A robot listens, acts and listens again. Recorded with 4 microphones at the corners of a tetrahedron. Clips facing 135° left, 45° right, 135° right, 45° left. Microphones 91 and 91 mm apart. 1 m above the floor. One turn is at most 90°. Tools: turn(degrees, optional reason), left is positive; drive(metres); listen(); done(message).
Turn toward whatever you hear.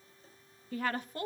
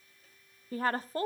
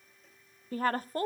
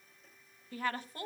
turn(degrees=-90, reason="The woman speaking: 95° right.")
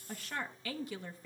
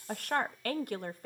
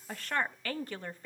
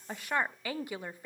turn(degrees=-30, reason="The woman speaking is now 30° right.")
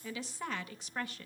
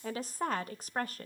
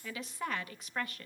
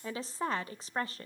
turn(degrees=-10, reason="The woman speaking is now 10° right.")
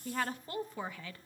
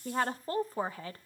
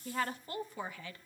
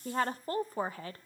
done("Found it: a woman speaking, straight ahead.")